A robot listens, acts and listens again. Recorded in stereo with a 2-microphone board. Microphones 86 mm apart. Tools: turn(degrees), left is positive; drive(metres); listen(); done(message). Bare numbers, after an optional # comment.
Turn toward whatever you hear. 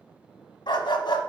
# The dog barking: about 65° left or 115° left.
turn(65)
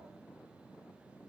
listen()
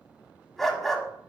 done("Facing the dog barking, 1 to 2 m away.")